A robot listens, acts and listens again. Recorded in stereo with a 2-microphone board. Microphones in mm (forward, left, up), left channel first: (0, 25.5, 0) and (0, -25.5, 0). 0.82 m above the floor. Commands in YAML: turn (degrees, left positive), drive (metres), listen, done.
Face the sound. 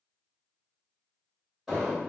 turn: -30
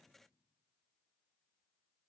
listen: true
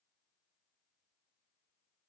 done: "I heard an explosion, but can't make it out now. It was about 25° left or 145° right."